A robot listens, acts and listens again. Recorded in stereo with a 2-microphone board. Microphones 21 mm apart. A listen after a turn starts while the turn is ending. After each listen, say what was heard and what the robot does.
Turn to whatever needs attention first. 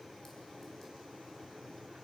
Keep listening.
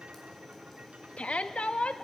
Turn 90° left.
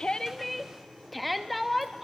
Facing the shout, under 1 m away.